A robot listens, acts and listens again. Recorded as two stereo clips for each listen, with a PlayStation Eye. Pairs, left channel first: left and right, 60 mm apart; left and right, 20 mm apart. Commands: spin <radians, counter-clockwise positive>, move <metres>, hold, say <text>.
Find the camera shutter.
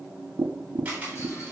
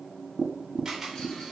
spin -0.44
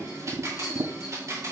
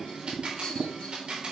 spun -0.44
spin -2.27
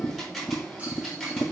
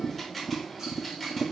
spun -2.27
say Found it: a camera shutter, straight ahead, 2 to 4 m away.